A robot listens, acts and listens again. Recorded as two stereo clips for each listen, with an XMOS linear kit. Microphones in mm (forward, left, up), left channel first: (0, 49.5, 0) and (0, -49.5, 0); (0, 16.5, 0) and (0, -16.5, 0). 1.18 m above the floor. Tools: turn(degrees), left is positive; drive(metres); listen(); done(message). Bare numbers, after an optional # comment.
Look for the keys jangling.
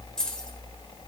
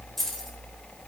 turn(30)
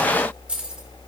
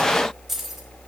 # So it is at 10° right.
turn(-10)
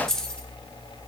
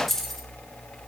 # The keys jangling is now 10° left.
turn(10)
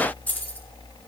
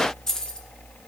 # The keys jangling is now 20° left.
turn(20)
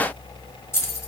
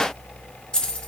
# The keys jangling is now 30° left.
turn(30)
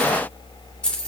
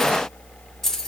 # The keys jangling is now 10° left.
turn(10)
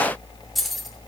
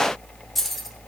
done("Found it: keys jangling, straight ahead, 2 to 4 m away.")